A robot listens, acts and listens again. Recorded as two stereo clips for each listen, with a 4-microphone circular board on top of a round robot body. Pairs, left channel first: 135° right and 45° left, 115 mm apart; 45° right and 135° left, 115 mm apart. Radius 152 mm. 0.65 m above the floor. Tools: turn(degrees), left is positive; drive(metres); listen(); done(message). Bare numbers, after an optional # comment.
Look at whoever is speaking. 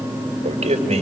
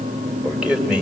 # The man speaking: 50° left.
turn(50)
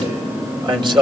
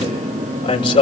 done("Facing the man speaking, over 4 m away.")